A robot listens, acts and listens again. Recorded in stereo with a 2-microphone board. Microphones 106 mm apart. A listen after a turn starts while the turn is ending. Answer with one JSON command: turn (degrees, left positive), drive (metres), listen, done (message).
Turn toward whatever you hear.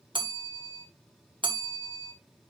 {"turn": -45}
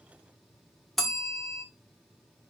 {"done": "Facing the bell."}